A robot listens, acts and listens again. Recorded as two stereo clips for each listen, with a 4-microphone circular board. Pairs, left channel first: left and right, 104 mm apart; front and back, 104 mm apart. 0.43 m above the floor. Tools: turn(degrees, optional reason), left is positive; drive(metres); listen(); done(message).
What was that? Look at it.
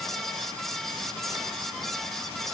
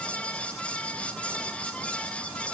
listen()
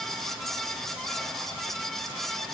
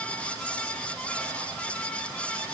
listen()
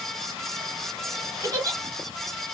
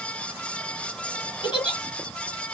turn(degrees=-35, reason="The giggle: 35° right.")
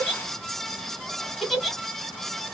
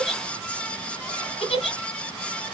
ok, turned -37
done("Found it: a giggle, straight ahead, 1 to 2 m away.")